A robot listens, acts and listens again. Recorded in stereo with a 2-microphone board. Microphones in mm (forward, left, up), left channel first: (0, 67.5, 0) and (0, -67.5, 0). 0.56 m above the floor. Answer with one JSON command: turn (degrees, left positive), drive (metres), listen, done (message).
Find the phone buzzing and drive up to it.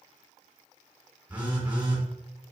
{"turn": -30}
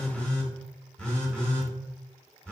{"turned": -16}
{"drive": 1.0}
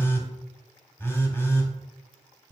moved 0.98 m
{"turn": 20}
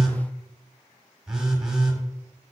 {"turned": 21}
{"drive": 1.0}
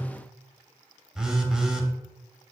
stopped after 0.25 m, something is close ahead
{"done": "I am next to the phone buzzing."}